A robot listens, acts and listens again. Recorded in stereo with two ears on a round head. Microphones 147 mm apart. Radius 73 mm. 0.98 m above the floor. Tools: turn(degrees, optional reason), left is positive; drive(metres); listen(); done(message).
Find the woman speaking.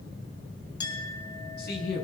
turn(degrees=65, reason="The woman speaking: about 65° left or 115° left.")
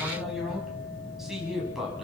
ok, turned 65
done("Facing the woman speaking, over 4 m away.")